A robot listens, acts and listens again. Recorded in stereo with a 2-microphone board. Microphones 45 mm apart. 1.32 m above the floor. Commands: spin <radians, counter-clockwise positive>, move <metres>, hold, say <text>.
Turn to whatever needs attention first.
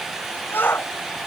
spin 0.87
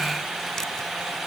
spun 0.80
hold
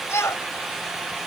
spin 1.40
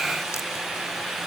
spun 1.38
hold
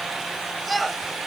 say Facing the shout.